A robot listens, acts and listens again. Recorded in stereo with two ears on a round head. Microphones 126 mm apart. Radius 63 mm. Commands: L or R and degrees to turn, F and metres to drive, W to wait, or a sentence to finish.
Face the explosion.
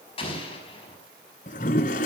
L40
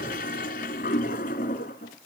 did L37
W
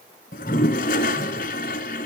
I heard an explosion, but can't make it out now. It was about straight ahead or 105° left.